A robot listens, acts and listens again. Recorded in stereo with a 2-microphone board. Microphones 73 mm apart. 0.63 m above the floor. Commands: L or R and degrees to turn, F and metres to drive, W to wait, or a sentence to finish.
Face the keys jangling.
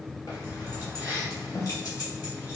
L55
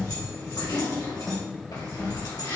L80
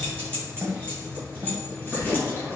L25
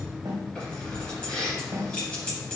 L10
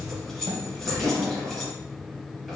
Found it: keys jangling, straight ahead, 2 to 4 m away.